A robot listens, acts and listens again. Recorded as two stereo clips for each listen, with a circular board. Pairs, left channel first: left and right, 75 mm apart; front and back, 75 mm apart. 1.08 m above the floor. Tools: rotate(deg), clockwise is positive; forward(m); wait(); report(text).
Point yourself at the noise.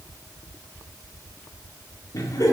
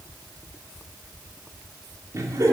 rotate(-135)
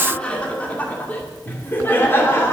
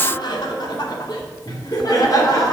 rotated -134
rotate(-35)
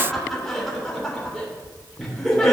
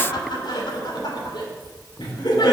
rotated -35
report("Facing the laughter, 2 to 4 m away.")